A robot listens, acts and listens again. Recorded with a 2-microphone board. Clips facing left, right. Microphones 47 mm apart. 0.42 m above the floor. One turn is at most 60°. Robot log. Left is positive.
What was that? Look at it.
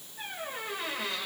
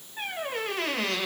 cmd yaw -60
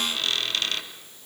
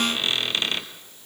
note: So it is at 25° right.
cmd yaw -25
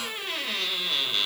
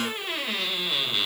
end: Found it: a squeak, straight ahead.